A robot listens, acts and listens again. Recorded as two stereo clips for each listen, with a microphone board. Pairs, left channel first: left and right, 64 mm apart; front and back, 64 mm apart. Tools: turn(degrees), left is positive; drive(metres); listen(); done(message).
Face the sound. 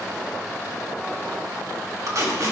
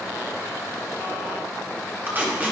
turn(degrees=-120)
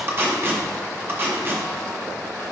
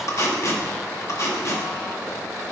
turn(degrees=-35)
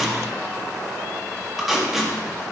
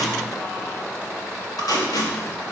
done("Found it: tape being pulled, straight ahead, 1 to 2 m away.")